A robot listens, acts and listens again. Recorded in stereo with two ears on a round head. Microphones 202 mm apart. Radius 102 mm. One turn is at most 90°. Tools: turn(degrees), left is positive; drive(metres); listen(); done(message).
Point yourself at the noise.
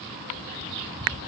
listen()
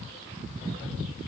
listen()
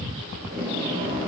turn(degrees=-40)
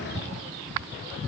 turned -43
listen()
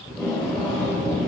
done("Found it: tape being pulled, straight ahead, over 4 m away.")